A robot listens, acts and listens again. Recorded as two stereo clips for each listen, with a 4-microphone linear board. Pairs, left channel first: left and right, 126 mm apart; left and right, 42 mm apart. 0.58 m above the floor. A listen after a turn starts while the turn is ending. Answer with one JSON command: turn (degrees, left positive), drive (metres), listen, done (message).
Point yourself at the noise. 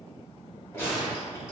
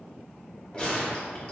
{"turn": 20}
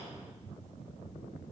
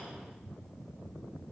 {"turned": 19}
{"listen": true}
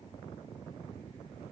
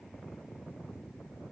{"done": "I heard a gunshot, but can't make it out now. It was about straight ahead or 140° left."}